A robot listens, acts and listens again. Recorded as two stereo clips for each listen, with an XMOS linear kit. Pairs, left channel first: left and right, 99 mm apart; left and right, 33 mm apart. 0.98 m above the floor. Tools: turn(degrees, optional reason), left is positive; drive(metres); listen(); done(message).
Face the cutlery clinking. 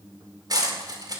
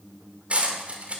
turn(degrees=-40, reason="The cutlery clinking: about 40° right or 140° right.")
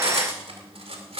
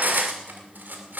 turn(degrees=-100, reason="So it is at 100° right.")
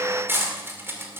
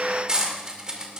turn(degrees=-25, reason="The cutlery clinking is now 25° right.")
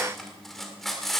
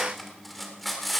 done("Facing the cutlery clinking.")